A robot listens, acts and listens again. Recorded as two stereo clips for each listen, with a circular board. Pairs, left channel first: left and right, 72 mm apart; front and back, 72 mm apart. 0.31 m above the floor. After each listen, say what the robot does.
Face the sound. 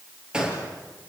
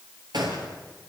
Turn 170° right.
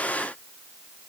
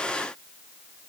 I heard a gunshot from this way, but can't make it out now.